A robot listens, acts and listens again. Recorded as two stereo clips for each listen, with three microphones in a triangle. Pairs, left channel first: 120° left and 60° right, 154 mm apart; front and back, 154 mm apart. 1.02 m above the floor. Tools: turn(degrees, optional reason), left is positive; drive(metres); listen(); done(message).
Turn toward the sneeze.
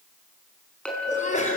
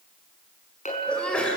turn(degrees=85, reason="The sneeze: 85° left.")
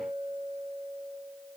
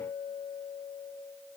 done("Facing where the sneeze came from. I can't hear it now.")